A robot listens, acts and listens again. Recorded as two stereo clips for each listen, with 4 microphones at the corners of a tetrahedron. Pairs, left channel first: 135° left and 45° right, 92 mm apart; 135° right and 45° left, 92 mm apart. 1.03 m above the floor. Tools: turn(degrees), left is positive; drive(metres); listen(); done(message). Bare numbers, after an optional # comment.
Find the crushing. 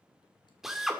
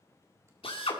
listen()
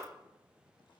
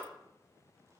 listen()
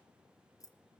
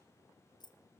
done("I can't make out crushing, only a drill and keys jangling.")